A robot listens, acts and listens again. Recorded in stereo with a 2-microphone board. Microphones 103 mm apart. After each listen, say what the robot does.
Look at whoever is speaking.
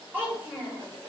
Turn 20° right.
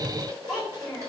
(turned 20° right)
Facing the child speaking, 2 to 4 m away.